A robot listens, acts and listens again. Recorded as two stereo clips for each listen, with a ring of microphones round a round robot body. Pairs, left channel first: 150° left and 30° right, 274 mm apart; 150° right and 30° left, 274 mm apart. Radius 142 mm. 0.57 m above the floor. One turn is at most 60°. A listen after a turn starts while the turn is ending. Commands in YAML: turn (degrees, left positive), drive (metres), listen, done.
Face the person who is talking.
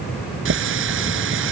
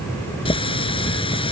listen: true
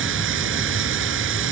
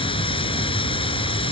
listen: true
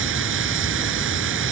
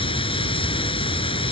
done: "I can't make out anyone speaking to turn to."